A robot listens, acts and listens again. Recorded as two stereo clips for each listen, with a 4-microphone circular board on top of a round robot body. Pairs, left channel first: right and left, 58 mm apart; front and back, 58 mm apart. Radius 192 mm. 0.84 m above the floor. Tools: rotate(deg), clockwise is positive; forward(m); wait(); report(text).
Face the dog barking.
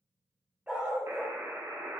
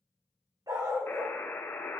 rotate(-165)
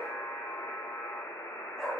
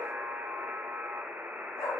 report("Found it: a dog barking, straight ahead, 2 to 4 m away.")